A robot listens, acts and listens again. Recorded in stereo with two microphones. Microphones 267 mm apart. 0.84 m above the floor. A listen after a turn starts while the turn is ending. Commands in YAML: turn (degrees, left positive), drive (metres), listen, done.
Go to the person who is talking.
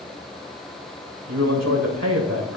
turn: -75
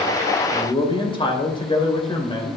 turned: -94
turn: 20
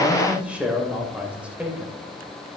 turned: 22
drive: 1.0
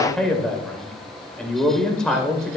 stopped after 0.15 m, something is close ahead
done: "Blocked. The man speaking is further on, straight ahead."